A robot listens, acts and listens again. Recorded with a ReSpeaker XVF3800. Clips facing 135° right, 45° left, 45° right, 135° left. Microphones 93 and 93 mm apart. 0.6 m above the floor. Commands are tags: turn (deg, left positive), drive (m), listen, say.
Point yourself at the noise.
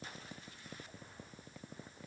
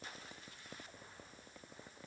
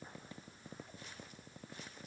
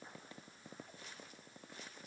<listen/>
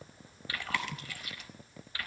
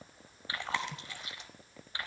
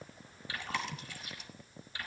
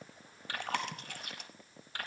<turn deg="110"/>
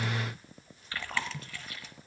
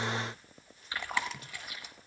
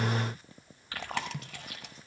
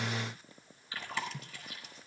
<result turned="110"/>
<turn deg="-30"/>
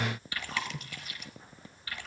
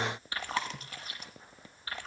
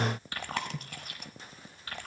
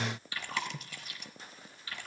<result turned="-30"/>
<turn deg="-10"/>
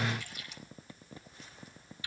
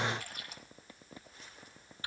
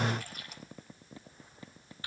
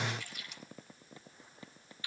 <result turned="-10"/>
<say>Facing the chewing.</say>